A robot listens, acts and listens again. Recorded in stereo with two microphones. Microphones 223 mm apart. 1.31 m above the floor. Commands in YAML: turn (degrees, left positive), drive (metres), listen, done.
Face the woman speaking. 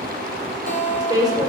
turn: -15
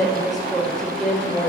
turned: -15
turn: 30
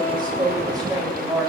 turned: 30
turn: -15
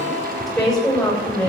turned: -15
done: "Facing the woman speaking, over 4 m away."